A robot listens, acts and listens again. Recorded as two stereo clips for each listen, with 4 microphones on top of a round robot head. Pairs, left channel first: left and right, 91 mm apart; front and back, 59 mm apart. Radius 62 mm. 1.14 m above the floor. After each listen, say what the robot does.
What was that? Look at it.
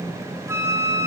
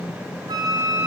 Turn 150° right.
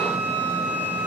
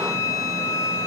Turn 15° left.
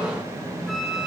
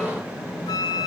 Facing the flute.